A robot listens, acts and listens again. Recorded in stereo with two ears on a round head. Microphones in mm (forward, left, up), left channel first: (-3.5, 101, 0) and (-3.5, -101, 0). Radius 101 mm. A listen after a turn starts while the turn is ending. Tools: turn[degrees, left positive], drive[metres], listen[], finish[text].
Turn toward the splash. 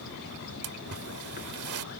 Thought: The splash: about 75° right or 105° right.
Action: turn[-75]
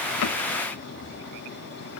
Action: listen[]
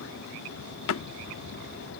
Action: finish[I heard a splash, but can't make it out now. It was about straight ahead or 30° right.]